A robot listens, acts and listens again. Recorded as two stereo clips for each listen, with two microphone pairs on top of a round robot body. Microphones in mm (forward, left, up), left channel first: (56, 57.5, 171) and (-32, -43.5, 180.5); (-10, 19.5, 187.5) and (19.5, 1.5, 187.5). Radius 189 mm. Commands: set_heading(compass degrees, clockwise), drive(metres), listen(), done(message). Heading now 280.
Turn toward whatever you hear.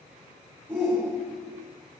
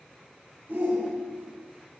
set_heading(335)
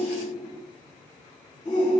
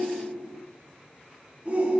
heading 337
done("Found it: a shout, straight ahead.")